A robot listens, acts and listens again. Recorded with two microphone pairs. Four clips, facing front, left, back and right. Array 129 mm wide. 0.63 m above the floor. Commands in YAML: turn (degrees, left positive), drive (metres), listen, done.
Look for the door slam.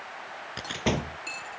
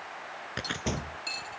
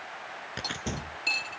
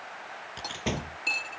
turn: -10
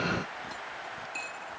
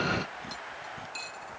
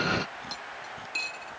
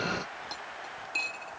done: "I heard a door slam from this way, but can't make it out now."